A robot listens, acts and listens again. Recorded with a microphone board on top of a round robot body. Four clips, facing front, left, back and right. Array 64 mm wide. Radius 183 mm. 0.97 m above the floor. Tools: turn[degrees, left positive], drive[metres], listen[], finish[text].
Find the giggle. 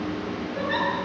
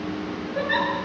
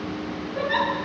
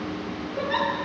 Thought: The giggle: 90° left.
Action: turn[90]
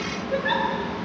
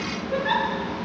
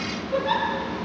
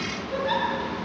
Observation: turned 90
Thought: The giggle is now 25° left.
Action: turn[25]
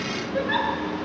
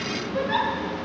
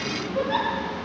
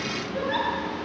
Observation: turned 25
Action: finish[Found it: a giggle, straight ahead, over 4 m away.]